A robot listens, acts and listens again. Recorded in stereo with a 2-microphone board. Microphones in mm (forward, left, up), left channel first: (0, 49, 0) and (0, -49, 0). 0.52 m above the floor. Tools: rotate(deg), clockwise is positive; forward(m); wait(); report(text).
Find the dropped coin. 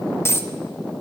rotate(-30)
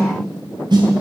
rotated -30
wait()
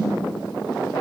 report("I heard a dropped coin, but can't make it out now. It was about straight ahead or 120° left.")